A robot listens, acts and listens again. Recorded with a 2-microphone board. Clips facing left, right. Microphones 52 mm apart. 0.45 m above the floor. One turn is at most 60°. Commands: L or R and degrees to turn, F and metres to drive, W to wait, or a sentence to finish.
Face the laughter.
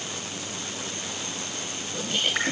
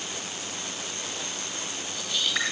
L45
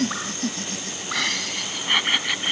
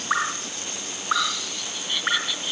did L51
L55
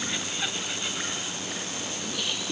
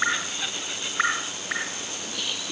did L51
Facing the laughter.